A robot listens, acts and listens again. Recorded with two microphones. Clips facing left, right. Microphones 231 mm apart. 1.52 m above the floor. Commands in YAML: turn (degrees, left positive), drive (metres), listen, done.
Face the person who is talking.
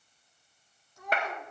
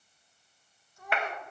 turn: 70
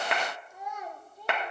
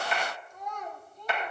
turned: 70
turn: 10
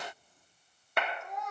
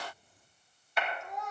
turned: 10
done: "Facing the child speaking."